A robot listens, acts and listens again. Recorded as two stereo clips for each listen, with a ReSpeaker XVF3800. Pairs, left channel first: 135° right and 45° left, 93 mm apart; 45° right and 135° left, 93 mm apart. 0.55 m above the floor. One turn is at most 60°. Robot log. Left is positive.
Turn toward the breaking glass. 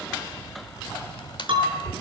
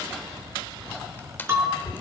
note: The breaking glass: 70° left.
cmd yaw +60
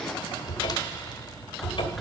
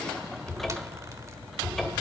note: Nothing new. It was at 10° left.
cmd yaw +10
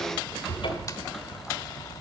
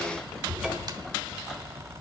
end: I heard breaking glass from this way, but can't make it out now.